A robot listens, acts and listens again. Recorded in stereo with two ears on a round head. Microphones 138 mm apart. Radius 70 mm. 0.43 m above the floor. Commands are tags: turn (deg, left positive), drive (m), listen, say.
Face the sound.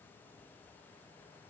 <listen/>
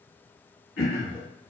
<turn deg="90"/>
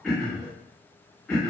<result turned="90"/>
<say>Found it: throat clearing, straight ahead.</say>